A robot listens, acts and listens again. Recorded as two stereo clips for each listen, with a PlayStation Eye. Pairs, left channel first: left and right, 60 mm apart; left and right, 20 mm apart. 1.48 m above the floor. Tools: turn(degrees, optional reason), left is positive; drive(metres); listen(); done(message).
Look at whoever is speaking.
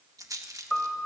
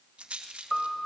listen()
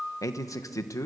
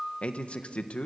turn(degrees=70, reason="The man speaking: about 70° left or 110° left.")
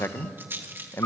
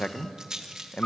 turn(degrees=45, reason="So it is at 45° left.")
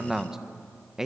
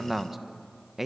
turn(degrees=-10, reason="The man speaking is now 10° right.")
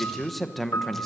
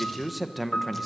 done("Facing the man speaking, 1 to 2 m away.")